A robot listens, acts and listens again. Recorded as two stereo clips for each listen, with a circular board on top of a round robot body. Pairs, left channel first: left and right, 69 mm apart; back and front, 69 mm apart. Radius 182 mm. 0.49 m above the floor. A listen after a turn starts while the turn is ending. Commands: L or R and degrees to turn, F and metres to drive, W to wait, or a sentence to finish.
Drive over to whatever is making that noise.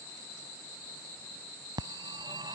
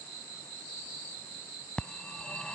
R105
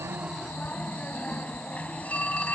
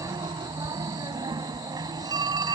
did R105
L20
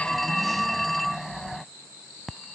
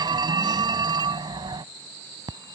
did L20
F1.0
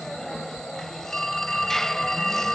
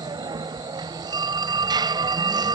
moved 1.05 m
F1.0
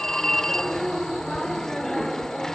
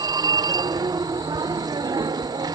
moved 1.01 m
F1.0
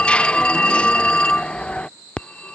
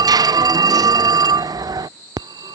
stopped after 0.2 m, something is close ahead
L15
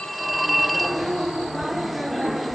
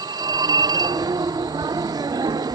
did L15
I am next to the phone ringing.